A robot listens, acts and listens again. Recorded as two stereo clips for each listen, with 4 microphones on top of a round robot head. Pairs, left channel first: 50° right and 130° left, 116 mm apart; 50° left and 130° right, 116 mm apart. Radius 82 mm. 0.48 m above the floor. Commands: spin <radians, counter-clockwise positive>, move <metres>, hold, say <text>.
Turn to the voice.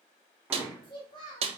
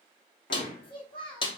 say Facing the child speaking, 2 to 4 m away.